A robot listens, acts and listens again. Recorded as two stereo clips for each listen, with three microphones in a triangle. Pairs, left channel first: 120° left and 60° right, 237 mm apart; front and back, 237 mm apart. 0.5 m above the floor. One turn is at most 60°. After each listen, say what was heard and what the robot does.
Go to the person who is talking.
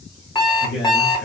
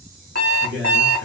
The man speaking: 150° left. Turn 60° left.
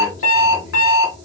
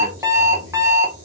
The man speaking is now 70° left. Turn 60° left.
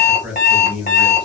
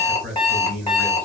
The man speaking is now 25° left. Turn 25° left.
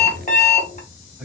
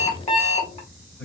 The man speaking is now 25° left. Turn 25° left.
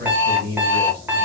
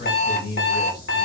The man speaking is now 15° right. Turn 15° right.
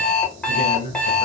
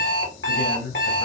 Drive 1.0 m forward.
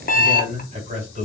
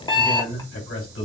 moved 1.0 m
Drive 1.0 m forward.
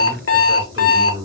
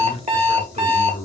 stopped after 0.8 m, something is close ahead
Arrived at the man speaking, straight ahead.